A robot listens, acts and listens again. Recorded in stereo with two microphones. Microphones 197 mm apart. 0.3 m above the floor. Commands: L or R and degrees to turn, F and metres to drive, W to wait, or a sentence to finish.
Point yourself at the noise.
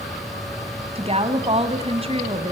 R30
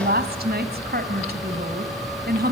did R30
R115
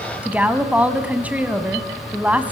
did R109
R10
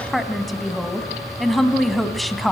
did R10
Facing the woman speaking.